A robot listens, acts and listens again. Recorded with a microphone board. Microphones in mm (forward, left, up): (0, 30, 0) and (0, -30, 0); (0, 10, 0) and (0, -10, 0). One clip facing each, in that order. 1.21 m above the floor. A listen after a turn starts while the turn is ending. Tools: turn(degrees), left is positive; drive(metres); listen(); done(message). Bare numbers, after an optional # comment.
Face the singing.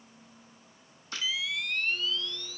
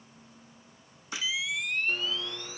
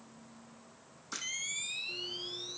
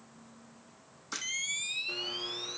listen()
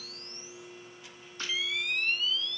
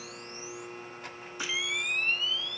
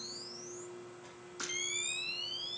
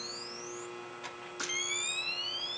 listen()
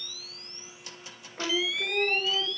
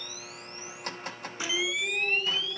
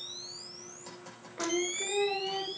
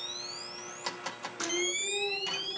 # The singing: about 50° left or 130° left.
turn(50)
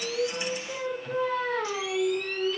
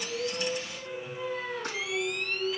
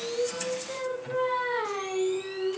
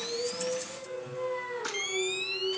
# So it is at 80° left.
turn(80)
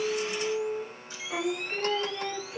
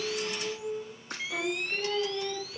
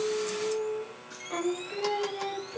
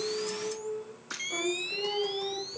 # The singing is now 20° left.
turn(20)
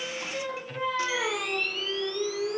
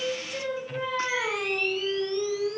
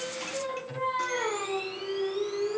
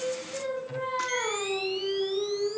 done("Facing the singing, 2 to 4 m away.")